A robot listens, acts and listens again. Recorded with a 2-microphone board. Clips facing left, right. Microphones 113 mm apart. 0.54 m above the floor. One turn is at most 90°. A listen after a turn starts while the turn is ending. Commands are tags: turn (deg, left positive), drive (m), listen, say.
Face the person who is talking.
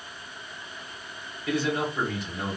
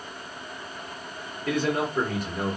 <turn deg="-55"/>
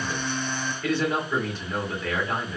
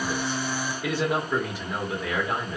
<turn deg="-15"/>
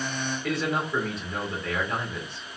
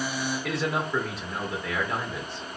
<say>Facing the man speaking, 1 to 2 m away.</say>